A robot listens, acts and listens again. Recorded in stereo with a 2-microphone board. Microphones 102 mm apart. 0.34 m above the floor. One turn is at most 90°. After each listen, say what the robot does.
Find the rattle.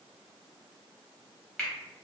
Keep listening.
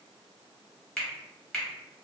Keep listening.
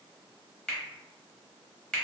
I can't make out a rattle, only a finger snap.